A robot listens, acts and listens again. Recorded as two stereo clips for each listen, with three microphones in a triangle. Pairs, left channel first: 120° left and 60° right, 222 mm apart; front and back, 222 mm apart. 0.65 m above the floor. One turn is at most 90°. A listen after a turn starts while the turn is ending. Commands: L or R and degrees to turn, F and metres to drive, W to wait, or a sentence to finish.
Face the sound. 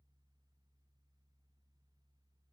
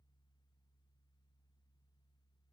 W
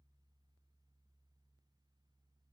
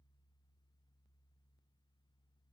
W
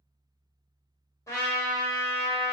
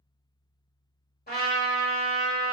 L45
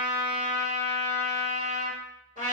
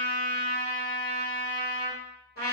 Found it: a trumpet, straight ahead, 1 to 2 m away.